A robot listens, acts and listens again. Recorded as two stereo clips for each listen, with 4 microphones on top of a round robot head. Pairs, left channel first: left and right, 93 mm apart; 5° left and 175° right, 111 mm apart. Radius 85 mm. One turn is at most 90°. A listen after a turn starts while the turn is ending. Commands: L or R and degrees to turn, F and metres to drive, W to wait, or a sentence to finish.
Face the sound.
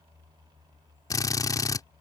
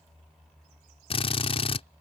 L40
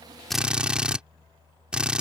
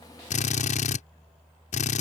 R10
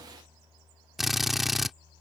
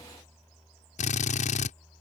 Facing the drill.